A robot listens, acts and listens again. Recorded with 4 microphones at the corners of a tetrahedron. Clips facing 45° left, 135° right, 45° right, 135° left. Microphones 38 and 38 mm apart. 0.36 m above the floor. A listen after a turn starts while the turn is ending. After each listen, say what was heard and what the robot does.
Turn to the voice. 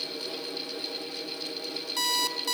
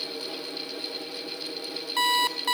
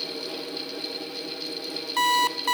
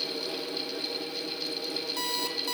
Keep listening.
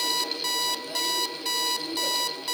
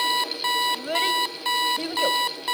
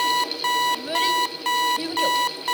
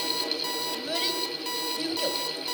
The child speaking: 115° right. Turn 115° right.
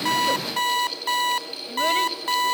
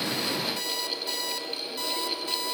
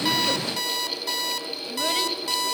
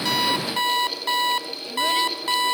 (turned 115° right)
Keep listening.
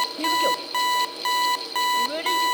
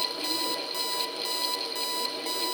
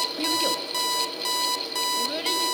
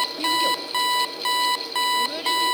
The child speaking is now 40° left. Turn 40° left.
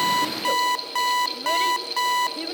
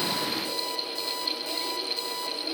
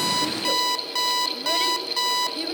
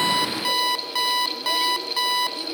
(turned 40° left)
Keep listening.
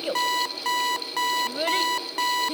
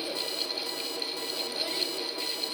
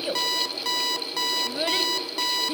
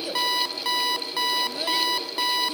The child speaking is now 20° left. Turn 20° left.
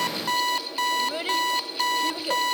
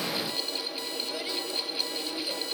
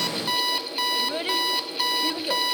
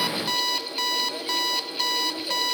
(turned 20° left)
Facing the child speaking.